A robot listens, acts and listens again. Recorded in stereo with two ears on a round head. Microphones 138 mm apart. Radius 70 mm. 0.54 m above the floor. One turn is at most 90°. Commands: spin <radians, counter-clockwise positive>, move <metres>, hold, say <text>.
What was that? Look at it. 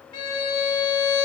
spin 0.52
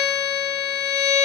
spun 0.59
spin 1.57
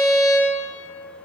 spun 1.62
spin 0.44
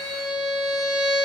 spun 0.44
say Facing the violin.